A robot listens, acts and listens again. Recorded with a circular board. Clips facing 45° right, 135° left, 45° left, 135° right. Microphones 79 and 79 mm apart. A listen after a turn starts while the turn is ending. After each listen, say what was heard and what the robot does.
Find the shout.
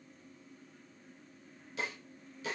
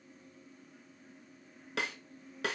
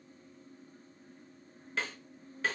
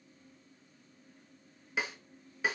Keep listening.
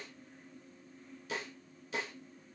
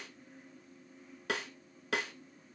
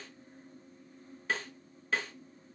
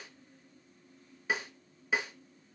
Keep listening.
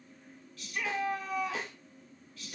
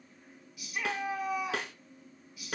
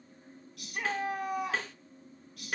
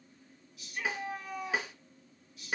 The shout: 60° left. Turn 60° left.
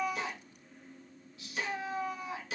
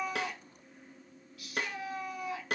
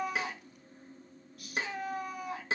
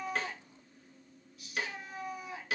The shout is now 15° left. Turn 15° left.
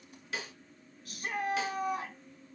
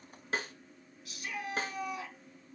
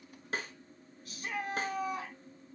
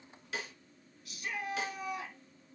Facing the shout.